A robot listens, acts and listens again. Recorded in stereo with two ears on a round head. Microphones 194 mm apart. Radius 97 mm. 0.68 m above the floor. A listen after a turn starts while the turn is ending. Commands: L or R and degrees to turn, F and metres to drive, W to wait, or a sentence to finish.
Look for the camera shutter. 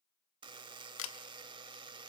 L65
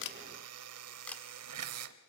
Facing the camera shutter.